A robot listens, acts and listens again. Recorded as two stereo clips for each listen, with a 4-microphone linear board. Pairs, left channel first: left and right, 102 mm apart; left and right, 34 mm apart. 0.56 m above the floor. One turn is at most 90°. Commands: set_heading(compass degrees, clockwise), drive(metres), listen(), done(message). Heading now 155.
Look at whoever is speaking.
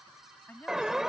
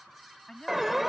set_heading(135)
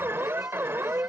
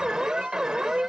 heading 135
listen()
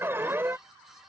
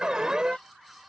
listen()
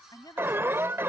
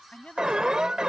set_heading(45)
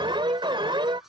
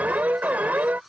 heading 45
set_heading(355)
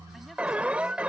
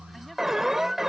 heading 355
listen()
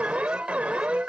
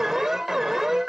done("Facing where the woman speaking came from. I can't hear it now.")